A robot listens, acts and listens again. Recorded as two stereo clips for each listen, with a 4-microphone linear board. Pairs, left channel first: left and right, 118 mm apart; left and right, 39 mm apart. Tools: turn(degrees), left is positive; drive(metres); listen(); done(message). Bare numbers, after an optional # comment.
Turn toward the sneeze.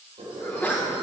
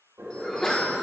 turn(30)
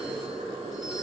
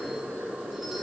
listen()
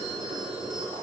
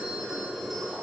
done("I heard a sneeze, but can't make it out now. It was about 15° right or 135° left.")